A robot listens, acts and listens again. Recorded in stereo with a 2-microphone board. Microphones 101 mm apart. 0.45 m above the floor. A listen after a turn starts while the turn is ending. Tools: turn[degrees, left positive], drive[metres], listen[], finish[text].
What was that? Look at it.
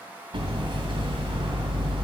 Thought: The hammering: about 55° right or 125° right.
Action: turn[-55]
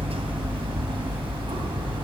Thought: So it is at 65° right.
Action: turn[-65]
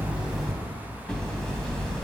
Action: finish[Facing the hammering.]